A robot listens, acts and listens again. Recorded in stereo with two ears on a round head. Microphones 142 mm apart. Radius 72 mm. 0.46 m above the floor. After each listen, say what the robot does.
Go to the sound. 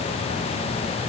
Keep listening.
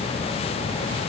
Keep listening.
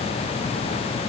I can't make out anything to turn to.